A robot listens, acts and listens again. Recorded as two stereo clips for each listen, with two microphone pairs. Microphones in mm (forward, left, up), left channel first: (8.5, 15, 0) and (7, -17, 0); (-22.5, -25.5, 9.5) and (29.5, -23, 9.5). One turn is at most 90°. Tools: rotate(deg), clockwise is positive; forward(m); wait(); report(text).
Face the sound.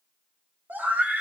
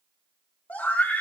rotate(90)
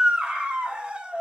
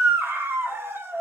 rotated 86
rotate(35)
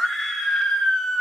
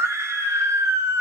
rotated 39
report("Facing the scream.")